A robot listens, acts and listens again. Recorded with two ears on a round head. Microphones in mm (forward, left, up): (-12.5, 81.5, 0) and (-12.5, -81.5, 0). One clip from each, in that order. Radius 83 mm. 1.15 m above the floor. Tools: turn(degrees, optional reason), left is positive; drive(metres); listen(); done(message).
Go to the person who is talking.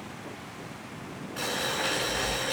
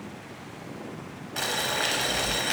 listen()
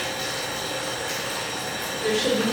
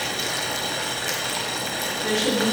turn(degrees=30, reason="The woman speaking: about 30° left or 150° left.")
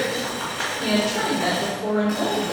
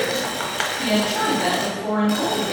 drive(metres=1.0)
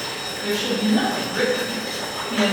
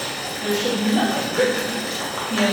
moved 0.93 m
drive(metres=1.0)
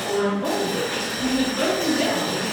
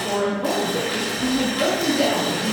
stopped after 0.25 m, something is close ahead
done("Arrived at the woman speaking, straight ahead.")